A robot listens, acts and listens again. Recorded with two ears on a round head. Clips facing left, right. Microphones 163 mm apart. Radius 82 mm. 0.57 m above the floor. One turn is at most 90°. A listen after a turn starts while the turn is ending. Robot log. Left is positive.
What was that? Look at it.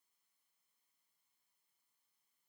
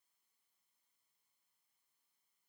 cmd idle
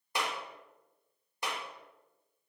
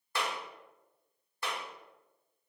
note: The clap: about 15° left or 165° left.
cmd yaw +15
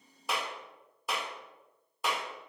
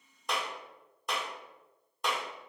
end: Found it: a clap, straight ahead, under 1 m away.